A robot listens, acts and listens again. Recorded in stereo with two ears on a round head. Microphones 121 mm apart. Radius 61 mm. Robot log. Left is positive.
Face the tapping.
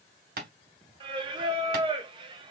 cmd yaw -90
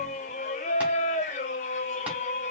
cmd idle
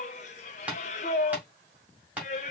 note: The tapping is now 10° right.
cmd yaw -10
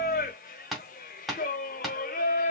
end: Found it: tapping, straight ahead, 1 to 2 m away.